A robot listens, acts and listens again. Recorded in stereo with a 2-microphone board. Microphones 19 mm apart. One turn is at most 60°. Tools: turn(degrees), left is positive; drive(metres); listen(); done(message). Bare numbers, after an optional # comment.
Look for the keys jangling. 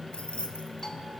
turn(60)
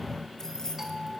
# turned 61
# So it is at 30° left.
turn(30)
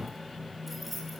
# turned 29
done("Found it: keys jangling, straight ahead.")